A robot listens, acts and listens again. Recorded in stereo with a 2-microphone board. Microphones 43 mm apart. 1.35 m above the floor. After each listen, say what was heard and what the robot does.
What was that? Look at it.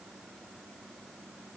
Keep listening.
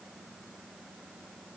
Keep listening.
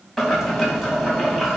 Turn 30° left.
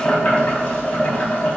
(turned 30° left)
So it is at 150° left. Turn 150° left.
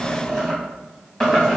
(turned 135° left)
The boiling is now 15° left. Turn 15° left.
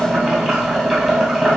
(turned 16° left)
Facing the boiling.